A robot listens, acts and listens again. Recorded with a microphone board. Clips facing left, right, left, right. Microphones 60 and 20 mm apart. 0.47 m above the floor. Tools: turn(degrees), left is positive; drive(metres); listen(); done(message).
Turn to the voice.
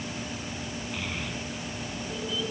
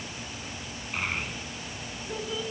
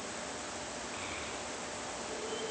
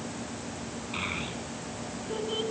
turn(degrees=-45)
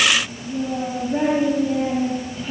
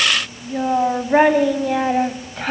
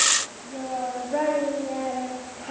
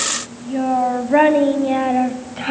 turn(degrees=-110)
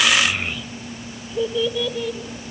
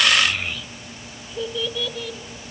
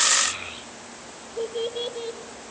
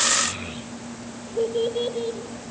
turn(degrees=10)
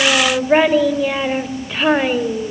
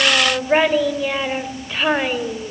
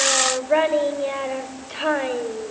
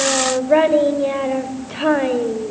done("Found it: a child speaking, straight ahead, 1 to 2 m away.")